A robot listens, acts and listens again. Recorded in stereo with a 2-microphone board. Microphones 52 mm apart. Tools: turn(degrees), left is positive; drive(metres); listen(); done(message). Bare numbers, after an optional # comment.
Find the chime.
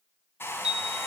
turn(-30)
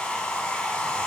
listen()
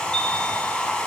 listen()
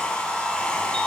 done("I heard a chime, but can't make it out now. It was about 15° left or 135° right.")